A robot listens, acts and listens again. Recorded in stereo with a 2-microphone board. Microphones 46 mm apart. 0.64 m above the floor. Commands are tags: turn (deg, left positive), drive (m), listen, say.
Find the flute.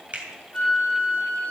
<turn deg="30"/>
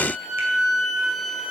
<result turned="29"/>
<say>Facing the flute.</say>